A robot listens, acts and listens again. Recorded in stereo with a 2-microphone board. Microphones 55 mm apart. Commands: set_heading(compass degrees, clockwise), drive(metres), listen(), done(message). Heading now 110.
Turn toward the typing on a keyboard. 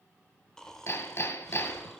listen()
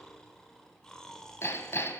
listen()
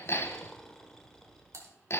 set_heading(170)
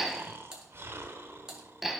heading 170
set_heading(185)
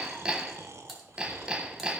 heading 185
done("Found it: typing on a keyboard, straight ahead, 1 to 2 m away.")